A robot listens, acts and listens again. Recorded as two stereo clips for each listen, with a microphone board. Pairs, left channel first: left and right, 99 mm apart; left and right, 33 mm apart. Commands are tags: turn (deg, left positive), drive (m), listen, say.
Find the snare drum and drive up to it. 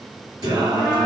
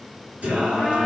<listen/>
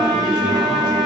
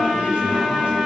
<listen/>
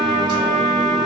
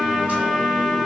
<say>I can't make out a snare drum, only a trumpet and singing.</say>